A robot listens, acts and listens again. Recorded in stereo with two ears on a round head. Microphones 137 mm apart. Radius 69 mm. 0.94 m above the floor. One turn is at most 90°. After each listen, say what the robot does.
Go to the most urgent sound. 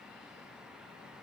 Keep listening.
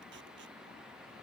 Keep listening.
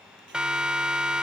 Turn 30° right.
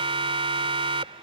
Turn 90° right.
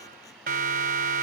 Turn 60° right.
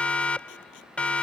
Drive 1.0 m forward.
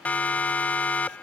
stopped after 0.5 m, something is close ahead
Turn 10° left.
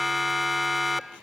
Something is in my way. I am facing the siren but have not reached it.